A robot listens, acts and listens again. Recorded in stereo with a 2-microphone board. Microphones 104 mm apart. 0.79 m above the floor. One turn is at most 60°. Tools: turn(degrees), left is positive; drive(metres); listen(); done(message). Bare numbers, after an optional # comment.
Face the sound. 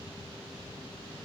listen()
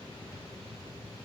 listen()
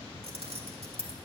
# The keys jangling: about 75° right or 105° right.
turn(-60)
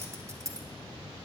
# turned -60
# So it is at 35° right.
turn(-35)
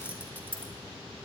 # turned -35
# The keys jangling is now 20° right.
turn(-20)
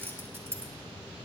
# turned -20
# The keys jangling is now 25° right.
turn(-25)
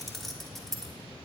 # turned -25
done("Facing the keys jangling.")